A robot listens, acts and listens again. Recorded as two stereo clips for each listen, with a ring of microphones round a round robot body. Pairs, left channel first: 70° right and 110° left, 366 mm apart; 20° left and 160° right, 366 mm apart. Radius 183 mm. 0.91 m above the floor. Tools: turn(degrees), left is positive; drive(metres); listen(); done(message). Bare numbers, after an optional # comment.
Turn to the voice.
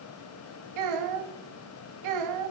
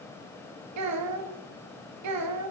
# The child speaking: 155° left.
turn(155)
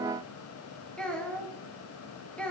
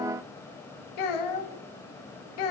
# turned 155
# The child speaking is now 20° left.
turn(20)
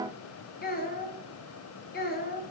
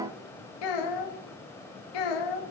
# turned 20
done("Found it: a child speaking, straight ahead, under 1 m away.")